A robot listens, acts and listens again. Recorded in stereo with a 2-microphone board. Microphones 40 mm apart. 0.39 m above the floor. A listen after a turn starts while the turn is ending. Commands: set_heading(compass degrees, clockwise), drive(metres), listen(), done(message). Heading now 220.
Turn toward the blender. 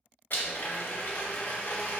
set_heading(165)
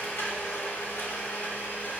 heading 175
set_heading(105)
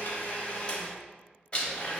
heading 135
set_heading(105)
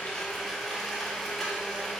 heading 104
done("Found it: a blender, straight ahead, under 1 m away.")